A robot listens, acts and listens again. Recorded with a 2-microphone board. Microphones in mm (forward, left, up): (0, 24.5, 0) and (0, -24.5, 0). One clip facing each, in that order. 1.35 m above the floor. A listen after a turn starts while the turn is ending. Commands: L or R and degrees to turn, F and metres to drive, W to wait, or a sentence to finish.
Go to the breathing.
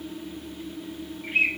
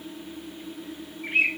W
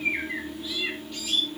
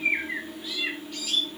W
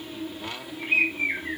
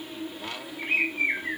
I can't make out breathing to turn to.